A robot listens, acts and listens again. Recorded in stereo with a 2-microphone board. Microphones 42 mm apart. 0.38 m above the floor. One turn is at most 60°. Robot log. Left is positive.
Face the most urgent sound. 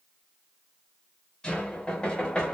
cmd idle
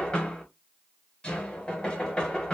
cmd idle
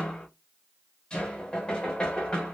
end: I can't make out anything urgent to turn to.